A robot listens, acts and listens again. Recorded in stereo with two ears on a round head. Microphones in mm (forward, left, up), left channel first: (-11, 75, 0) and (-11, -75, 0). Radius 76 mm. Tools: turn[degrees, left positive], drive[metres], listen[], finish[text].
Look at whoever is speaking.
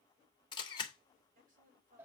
Thought: The woman speaking: about 55° right or 125° right.
Action: turn[-55]
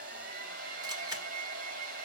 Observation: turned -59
Action: listen[]
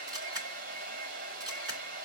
Action: listen[]
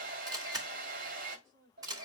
Thought: So it is at 85° right.
Action: turn[-85]
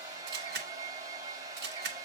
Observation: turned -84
Action: listen[]
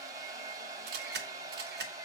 Action: listen[]
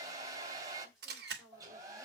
Action: finish[Found it: a woman speaking, straight ahead, over 4 m away.]